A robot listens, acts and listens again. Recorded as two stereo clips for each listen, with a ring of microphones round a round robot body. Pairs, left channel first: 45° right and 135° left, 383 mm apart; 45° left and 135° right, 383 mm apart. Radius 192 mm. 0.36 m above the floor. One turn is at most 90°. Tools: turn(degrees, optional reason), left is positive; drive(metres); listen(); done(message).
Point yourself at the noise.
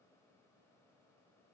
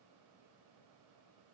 listen()
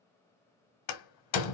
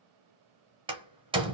turn(degrees=-60, reason="The door slam: 60° right.")
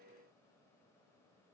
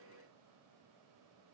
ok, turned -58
done("Facing where the door slam came from. I can't hear it now.")